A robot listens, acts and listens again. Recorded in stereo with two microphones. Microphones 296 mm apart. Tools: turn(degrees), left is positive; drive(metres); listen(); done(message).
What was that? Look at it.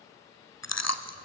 turn(degrees=65)
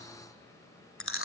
turn(degrees=50)
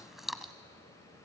done("Found it: chewing, straight ahead, 1 to 2 m away.")